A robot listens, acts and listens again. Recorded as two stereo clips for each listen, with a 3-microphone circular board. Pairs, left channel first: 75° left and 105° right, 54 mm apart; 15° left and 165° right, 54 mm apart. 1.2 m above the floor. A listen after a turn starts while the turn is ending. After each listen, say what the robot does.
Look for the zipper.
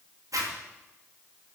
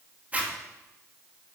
Turn 100° right.
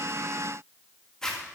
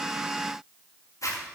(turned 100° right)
Facing the zipper.